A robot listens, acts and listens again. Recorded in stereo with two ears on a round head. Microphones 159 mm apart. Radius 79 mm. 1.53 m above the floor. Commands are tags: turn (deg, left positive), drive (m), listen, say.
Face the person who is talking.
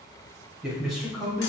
<turn deg="30"/>
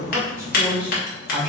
<turn deg="30"/>
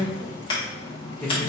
<turn deg="30"/>
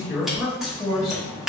<turn deg="30"/>
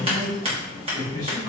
<turn deg="-30"/>
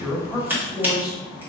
<say>Found it: a man speaking, straight ahead, 1 to 2 m away.</say>